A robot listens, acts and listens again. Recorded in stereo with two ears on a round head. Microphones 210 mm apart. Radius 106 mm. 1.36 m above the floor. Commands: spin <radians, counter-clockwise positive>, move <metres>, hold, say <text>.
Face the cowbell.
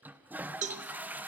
spin -0.52
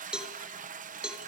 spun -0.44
say Found it: a cowbell, straight ahead, 1 to 2 m away.